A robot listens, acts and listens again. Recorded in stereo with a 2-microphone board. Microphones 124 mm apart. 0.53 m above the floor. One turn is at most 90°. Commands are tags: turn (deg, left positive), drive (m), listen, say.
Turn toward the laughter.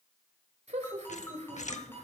<turn deg="-65"/>
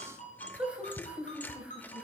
<turn deg="-10"/>
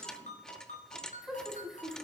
<say>Found it: laughter, straight ahead, 2 to 4 m away.</say>